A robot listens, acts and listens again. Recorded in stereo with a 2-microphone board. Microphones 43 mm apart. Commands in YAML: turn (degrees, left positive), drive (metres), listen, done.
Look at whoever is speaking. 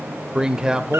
turn: -15
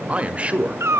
turn: -150
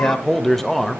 turn: 10
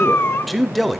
done: "Facing the man speaking."